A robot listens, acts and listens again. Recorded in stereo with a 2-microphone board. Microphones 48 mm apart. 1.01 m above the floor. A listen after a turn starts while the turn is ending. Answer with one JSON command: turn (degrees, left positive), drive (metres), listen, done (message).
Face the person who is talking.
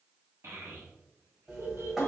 {"turn": -60}
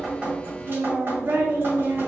{"turn": -60}
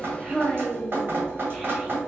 {"turn": -10}
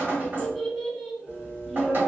{"done": "Facing the child speaking, under 1 m away."}